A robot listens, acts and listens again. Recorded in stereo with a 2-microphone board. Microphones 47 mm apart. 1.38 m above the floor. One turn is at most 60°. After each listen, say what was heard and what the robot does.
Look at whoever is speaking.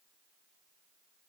Keep listening.
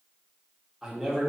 Turn 30° right.
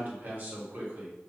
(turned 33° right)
So it is at 140° right. Turn 60° right.
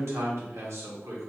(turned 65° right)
The man speaking is now 75° right. Turn 60° right.
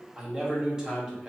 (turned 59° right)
The man speaking is now 15° right. Turn 15° right.
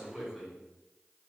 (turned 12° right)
Found it: a man speaking, straight ahead.